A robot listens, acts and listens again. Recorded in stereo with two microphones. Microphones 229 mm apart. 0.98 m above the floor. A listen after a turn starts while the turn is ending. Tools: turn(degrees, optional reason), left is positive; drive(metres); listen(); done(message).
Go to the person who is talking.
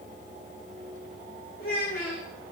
turn(degrees=70, reason="The child speaking: about 70° left or 110° left.")
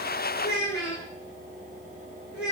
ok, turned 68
turn(degrees=45, reason="So it is at 45° left.")
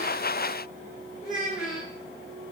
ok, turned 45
drive(metres=1.0)
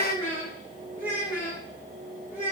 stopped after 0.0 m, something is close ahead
turn(degrees=-10, reason="The child speaking is now 10° right.")
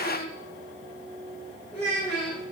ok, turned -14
done("Blocked. The child speaking is further on, straight ahead.")